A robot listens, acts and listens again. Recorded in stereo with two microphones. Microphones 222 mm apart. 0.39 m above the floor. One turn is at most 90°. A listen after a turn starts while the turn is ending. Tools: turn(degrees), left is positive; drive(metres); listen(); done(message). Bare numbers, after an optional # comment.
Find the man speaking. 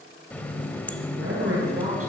turn(-90)
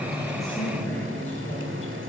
listen()
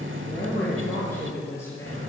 # The man speaking is now 10° left.
turn(10)
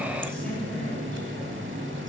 listen()
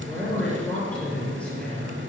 done("Found it: a man speaking, straight ahead, over 4 m away.")